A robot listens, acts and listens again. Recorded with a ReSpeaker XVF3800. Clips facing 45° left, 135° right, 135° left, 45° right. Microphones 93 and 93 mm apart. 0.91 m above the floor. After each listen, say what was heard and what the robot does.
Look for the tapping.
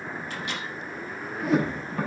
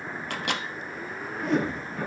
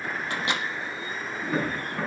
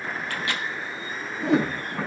The tapping: 25° left. Turn 25° left.
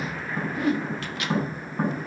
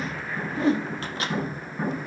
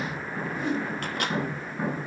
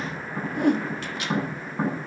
The tapping is now 10° right. Turn 10° right.
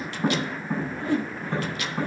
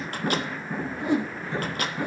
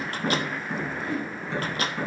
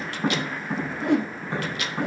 Facing the tapping.